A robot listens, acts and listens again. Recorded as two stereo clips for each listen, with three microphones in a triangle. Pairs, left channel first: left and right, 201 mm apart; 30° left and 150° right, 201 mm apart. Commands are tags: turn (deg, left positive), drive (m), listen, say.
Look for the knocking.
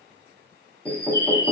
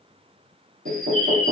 <turn deg="-175"/>
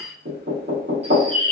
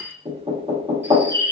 <turn deg="-80"/>
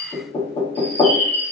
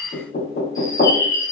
<turn deg="25"/>
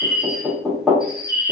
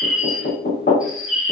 <say>Facing the knocking, 1 to 2 m away.</say>